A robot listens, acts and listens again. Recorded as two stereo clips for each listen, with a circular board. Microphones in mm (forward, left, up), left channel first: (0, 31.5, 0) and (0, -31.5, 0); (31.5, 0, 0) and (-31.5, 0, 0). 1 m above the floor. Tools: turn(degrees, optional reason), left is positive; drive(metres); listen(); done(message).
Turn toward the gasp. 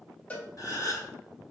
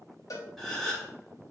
turn(degrees=85, reason="The gasp: 85° left.")
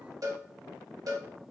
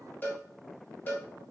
done("Facing where the gasp came from. I can't hear it now.")